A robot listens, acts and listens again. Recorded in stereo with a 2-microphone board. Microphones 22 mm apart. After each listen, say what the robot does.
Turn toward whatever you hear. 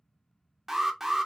Turn 30° right.
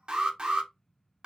Turn 140° right.
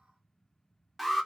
Turn 10° right.
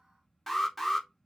Found it: an alarm, straight ahead, 1 to 2 m away.